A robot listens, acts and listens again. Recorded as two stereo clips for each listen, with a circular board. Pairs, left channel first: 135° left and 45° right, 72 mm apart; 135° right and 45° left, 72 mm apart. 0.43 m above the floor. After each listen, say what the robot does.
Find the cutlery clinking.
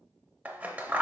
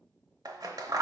Keep listening.
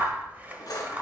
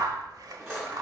Turn 100° left.
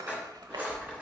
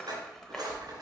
Turn 25° left.
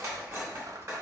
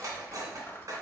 Facing the cutlery clinking.